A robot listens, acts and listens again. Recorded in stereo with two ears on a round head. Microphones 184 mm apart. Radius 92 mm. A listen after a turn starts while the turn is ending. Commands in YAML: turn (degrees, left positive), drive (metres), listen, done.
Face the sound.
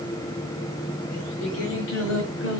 turn: 60
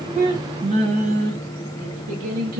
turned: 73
turn: -45
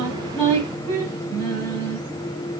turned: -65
done: "Facing the singing."